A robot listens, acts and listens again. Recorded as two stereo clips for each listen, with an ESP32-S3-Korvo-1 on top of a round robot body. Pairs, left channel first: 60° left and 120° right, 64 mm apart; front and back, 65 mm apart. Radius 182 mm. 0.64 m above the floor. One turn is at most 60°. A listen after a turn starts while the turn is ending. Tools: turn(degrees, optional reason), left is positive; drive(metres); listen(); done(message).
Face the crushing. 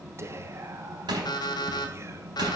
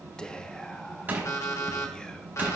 turn(degrees=-60, reason="The crushing: 120° right.")
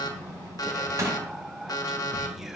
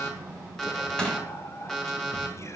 turn(degrees=-60, reason="The crushing is now 75° right.")
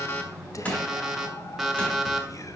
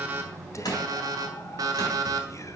turn(degrees=-10, reason="The crushing is now 10° right.")
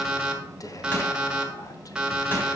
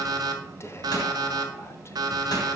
listen()
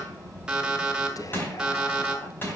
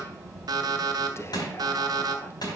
done("Facing the crushing, 2 to 4 m away.")